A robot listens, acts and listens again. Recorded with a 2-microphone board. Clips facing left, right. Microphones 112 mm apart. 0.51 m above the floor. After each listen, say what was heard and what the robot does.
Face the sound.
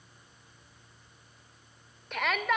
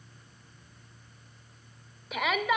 Turn 30° right.
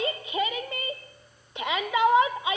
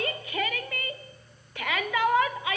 So it is at 25° left. Turn 25° left.
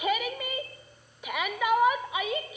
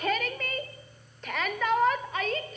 The shout is now 10° left. Turn 10° left.
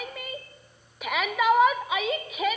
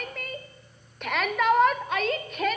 Found it: a shout, straight ahead, 1 to 2 m away.